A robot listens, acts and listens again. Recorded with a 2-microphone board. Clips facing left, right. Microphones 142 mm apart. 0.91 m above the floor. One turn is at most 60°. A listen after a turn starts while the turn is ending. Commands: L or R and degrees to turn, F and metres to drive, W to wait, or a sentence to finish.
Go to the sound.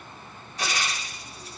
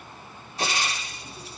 R30
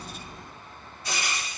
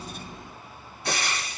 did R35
R60
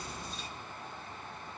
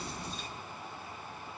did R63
R50
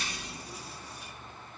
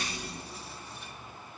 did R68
L15
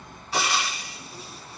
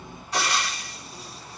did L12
F1.0
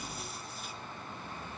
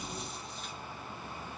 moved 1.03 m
W
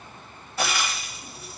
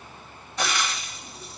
F1.0
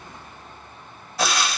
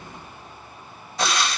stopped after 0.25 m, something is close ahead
I am next to the frying.